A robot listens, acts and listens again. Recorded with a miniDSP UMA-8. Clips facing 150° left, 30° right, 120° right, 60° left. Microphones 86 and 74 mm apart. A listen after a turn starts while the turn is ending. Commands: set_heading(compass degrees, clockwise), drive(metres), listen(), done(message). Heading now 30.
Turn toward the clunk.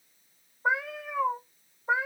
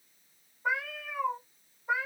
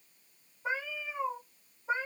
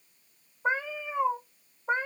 listen()
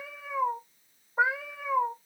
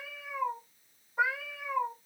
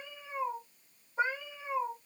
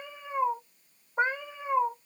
listen()
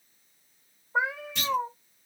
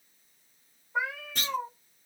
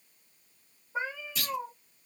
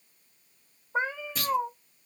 set_heading(15)
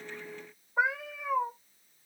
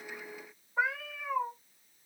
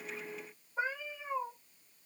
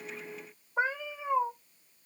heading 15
done("Facing where the clunk came from. I can't hear it now.")